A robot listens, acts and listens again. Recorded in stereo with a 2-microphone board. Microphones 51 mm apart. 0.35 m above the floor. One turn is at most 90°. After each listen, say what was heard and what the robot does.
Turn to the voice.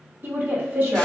The woman speaking: about 45° right or 135° right. Turn 45° right.
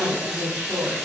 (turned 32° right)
So it is at 90° right. Turn 90° right.
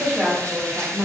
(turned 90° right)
Facing the woman speaking.